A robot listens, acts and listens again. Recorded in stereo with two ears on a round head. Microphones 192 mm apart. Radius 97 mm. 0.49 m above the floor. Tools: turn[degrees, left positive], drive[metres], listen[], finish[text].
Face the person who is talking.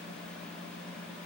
Action: listen[]
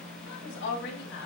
Thought: The woman speaking: about 50° left or 130° left.
Action: turn[50]
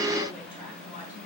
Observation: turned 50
Action: listen[]
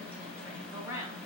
Thought: So it is at 15° right.
Action: turn[-15]
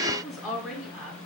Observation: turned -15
Action: finish[Facing the woman speaking.]